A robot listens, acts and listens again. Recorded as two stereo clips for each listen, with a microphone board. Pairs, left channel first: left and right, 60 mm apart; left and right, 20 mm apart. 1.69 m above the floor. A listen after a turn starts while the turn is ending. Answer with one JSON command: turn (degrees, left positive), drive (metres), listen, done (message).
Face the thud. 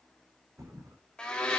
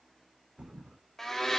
{"turn": -65}
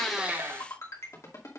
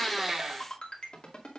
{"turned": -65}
{"listen": true}
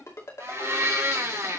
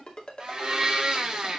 {"done": "I heard a thud, but can't make it out now. It was about straight ahead or 50° right."}